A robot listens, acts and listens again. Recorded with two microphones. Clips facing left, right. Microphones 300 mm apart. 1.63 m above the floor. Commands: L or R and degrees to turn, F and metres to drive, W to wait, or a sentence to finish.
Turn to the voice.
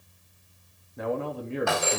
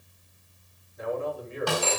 L70
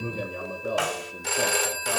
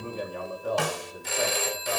L30
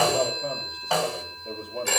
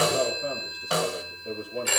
R15
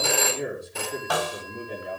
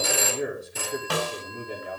Facing the man speaking, over 4 m away.